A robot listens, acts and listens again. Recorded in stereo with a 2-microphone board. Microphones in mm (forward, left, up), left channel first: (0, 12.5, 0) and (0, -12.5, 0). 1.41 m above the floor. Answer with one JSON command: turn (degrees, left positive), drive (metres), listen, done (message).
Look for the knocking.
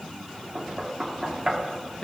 {"turn": -20}
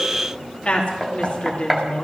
{"done": "Facing the knocking, 2 to 4 m away."}